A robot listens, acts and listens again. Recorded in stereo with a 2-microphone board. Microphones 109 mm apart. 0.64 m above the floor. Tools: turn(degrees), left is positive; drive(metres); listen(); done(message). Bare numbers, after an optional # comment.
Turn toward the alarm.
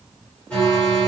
turn(30)
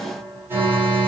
# So it is at 25° right.
turn(-25)
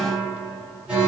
# The alarm is now 10° right.
turn(-10)
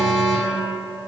done("Found it: an alarm, straight ahead, 2 to 4 m away.")